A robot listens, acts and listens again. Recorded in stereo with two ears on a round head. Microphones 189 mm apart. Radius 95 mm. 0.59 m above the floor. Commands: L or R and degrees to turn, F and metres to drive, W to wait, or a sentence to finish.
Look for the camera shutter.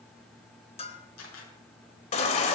L75
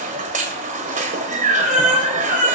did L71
W
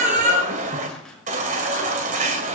W
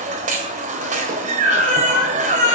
I heard a camera shutter, but can't make it out now. It was about 5° left or 35° left.